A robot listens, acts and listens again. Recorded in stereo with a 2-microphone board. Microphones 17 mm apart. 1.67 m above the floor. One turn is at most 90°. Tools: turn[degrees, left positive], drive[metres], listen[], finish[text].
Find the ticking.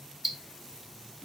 Action: turn[-30]
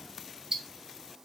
Thought: So it is at 145° right.
Action: turn[-90]
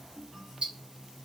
Thought: The ticking is now 85° right.
Action: turn[-85]
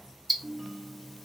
Action: finish[Facing the ticking, 1 to 2 m away.]